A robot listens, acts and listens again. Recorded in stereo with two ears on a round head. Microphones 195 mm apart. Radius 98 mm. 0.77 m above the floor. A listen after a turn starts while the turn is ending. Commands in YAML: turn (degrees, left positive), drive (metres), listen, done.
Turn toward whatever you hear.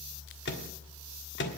turn: 55
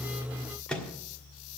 done: "Found it: a microwave, straight ahead, 1 to 2 m away."